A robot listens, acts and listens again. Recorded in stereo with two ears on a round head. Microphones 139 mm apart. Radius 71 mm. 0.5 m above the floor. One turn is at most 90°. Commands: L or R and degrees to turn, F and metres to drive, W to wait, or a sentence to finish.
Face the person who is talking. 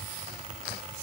W
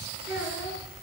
R30
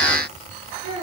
R90
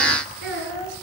R75
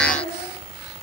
R20
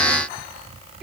W
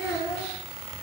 Facing the child speaking.